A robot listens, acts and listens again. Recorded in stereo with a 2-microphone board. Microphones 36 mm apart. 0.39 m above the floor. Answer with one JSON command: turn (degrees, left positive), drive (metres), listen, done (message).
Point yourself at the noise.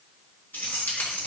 {"turn": 65}
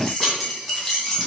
{"done": "Facing the keys jangling, 2 to 4 m away."}